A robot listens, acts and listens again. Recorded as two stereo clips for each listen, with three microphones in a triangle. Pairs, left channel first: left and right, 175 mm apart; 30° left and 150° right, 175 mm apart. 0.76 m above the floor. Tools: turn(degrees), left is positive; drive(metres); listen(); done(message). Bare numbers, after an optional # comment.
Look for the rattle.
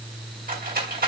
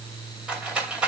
# The rattle: 65° right.
turn(-65)
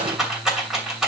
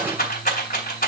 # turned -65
done("Found it: a rattle, straight ahead.")